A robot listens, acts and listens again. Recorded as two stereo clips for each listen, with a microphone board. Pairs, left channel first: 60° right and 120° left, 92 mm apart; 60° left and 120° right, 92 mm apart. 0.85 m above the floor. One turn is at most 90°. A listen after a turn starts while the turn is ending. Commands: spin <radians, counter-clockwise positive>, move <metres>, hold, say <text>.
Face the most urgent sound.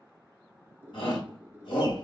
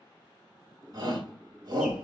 spin -1.40
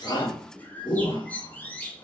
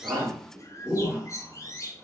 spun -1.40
spin -0.61
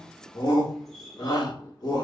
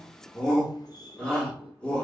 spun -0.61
spin -0.35
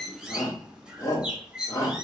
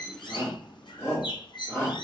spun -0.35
say Facing the shout.